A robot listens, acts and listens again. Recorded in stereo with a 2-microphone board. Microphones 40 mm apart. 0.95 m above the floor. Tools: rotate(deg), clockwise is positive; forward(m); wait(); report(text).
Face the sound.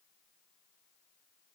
wait()
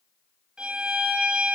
rotate(20)
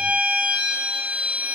rotate(140)
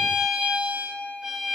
rotate(25)
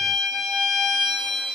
report("Found it: a violin, straight ahead.")